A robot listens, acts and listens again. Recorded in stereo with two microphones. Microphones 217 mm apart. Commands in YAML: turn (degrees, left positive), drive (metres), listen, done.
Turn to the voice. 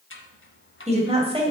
turn: -25
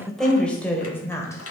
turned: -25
turn: 10
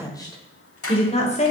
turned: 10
turn: 30
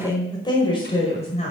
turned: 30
turn: 30
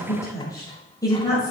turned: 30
turn: 15
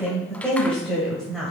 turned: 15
done: "Found it: a woman speaking, straight ahead, 2 to 4 m away."